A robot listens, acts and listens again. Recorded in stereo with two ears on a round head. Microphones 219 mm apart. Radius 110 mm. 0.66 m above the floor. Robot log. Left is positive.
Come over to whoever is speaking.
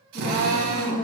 note: The woman speaking: about 35° left or 145° left.
cmd yaw +35
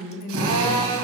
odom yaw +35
note: So it is at 110° left.
cmd yaw +110
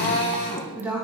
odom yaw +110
note: The woman speaking is now 10° right.
cmd yaw -10
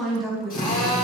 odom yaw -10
cmd fwd 1.0
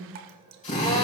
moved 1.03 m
cmd idle
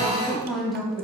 cmd fwd 1.0
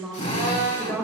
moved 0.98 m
cmd fwd 1.0
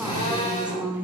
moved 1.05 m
cmd fwd 1.0
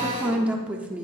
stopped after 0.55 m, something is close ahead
end: Arrived at the woman speaking, straight ahead.